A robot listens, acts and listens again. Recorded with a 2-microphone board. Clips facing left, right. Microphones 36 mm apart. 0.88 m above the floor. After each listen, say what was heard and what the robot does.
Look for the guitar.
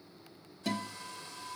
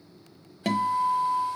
The guitar: about 55° right or 125° right. Turn 55° right.
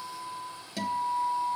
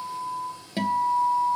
So it is at 35° right. Turn 35° right.
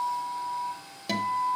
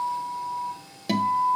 The guitar is now 10° right. Turn 10° right.
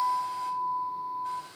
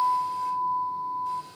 Facing the guitar, under 1 m away.